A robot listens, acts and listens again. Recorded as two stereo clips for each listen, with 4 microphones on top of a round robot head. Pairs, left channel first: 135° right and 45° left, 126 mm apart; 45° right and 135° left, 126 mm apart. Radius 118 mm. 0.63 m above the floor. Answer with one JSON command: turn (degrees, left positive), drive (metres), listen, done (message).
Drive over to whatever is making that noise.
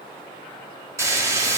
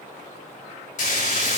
{"turn": -25}
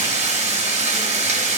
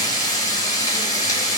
{"turn": 10}
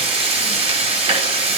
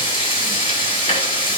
{"drive": 1.0}
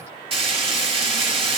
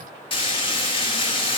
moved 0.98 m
{"drive": 1.0}
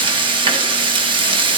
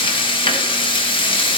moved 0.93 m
{"drive": 1.0}
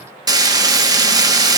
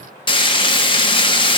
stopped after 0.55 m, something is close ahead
{"turn": -10}
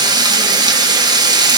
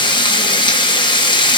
{"done": "I am next to the frying."}